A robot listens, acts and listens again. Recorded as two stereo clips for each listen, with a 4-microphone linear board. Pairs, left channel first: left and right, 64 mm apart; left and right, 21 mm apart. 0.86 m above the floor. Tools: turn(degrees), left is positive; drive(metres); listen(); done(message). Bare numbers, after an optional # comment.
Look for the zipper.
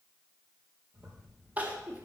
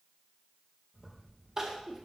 # The zipper: about 40° right or 140° right.
turn(-40)
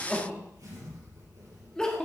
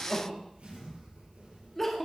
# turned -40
# So it is at 100° right.
turn(-100)
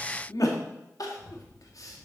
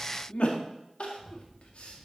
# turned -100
done("Facing the zipper, over 4 m away.")